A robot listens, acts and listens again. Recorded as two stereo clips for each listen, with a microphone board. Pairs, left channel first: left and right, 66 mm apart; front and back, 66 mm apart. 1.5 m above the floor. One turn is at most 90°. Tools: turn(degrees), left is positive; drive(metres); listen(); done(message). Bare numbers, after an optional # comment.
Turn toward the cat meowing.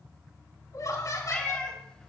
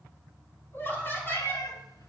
# The cat meowing: 15° left.
turn(15)
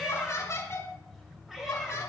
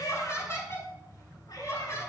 listen()
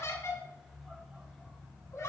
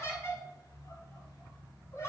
listen()
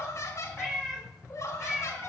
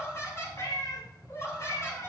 # The cat meowing is now 10° right.
turn(-10)
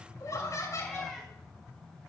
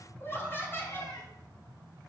listen()
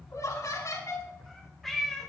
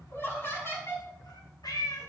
done("Found it: a cat meowing, straight ahead, over 4 m away.")